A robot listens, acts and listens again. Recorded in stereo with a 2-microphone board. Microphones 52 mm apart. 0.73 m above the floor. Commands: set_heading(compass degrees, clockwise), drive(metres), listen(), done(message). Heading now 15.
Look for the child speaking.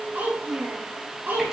set_heading(55)
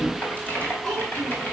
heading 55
done("Found it: a child speaking, straight ahead.")